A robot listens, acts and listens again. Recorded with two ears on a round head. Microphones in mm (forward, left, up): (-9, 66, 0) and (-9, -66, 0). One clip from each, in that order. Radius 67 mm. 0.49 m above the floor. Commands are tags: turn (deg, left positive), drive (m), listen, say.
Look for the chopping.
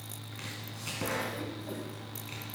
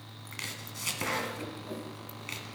<turn deg="-55"/>
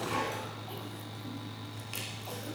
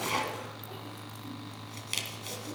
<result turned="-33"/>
<turn deg="-90"/>
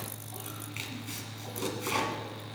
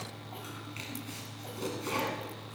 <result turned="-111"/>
<turn deg="20"/>
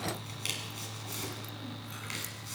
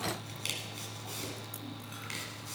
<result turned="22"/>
<say>Facing the chopping, 1 to 2 m away.</say>